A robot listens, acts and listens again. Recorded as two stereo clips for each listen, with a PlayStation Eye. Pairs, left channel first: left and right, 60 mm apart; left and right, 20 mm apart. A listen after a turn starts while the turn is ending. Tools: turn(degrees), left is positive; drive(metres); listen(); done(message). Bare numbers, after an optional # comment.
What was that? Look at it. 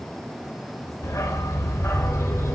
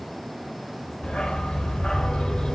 # The dog barking: about 45° left or 135° left.
turn(45)
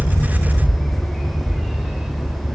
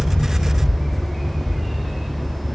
# So it is at 10° right.
turn(-10)
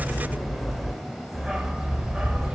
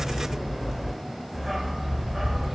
# The dog barking is now 15° right.
turn(-15)
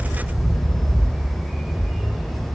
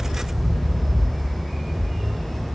done("Found it: a dog barking, straight ahead, 2 to 4 m away.")